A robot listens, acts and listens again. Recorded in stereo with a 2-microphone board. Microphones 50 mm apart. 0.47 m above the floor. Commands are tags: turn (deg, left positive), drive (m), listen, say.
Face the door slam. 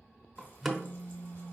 <turn deg="-30"/>
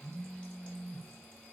<listen/>
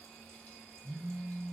<say>I heard a door slam, but can't make it out now. It was about 25° left or 145° right.</say>